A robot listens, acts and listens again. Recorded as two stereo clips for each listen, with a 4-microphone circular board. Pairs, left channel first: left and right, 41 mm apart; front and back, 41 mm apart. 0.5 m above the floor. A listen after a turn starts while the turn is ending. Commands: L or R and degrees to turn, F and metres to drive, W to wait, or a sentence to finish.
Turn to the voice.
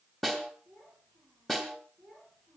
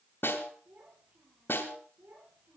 L155
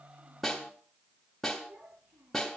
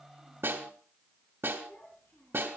R35
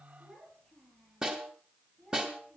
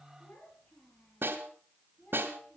Found it: a child speaking, straight ahead.